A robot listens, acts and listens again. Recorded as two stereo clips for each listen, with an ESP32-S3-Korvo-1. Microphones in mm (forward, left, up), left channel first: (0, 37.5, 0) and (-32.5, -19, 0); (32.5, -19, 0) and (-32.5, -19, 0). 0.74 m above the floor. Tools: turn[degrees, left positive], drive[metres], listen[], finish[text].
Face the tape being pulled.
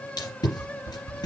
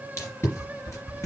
Thought: The tape being pulled: 50° left.
Action: turn[50]
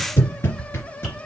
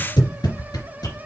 Action: finish[Facing the tape being pulled, 2 to 4 m away.]